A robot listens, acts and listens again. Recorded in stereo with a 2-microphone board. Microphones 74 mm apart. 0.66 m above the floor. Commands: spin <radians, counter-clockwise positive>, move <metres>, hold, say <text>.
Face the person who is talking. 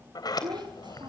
spin -1.57
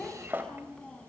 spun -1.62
spin 0.17
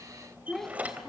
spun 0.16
say Facing the child speaking, 2 to 4 m away.